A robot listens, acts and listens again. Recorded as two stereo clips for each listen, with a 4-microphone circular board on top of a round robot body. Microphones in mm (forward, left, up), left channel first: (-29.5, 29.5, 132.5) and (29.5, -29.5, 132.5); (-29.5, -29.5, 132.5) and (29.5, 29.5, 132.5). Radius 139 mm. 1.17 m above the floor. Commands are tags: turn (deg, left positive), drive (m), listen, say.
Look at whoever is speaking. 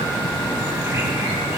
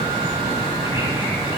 <listen/>
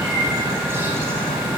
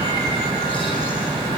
<listen/>
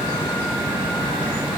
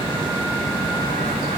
<say>I can't make out anyone speaking.</say>